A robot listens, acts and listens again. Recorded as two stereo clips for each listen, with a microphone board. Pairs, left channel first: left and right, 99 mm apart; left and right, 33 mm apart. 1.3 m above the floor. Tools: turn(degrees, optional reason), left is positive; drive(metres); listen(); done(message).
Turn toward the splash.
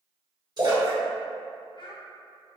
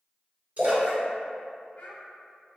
turn(degrees=-45, reason="The splash: about 45° right or 135° right.")
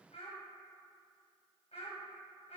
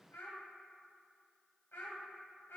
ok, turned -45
listen()
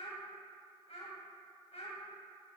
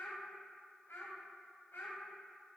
done("I heard a splash, but can't make it out now. It was about straight ahead or 90° right.")